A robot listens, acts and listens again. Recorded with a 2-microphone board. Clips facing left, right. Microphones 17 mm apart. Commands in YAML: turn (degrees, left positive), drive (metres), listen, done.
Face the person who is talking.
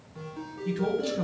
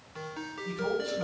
turn: 60
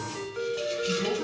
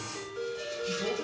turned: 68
done: "Facing the man speaking, over 4 m away."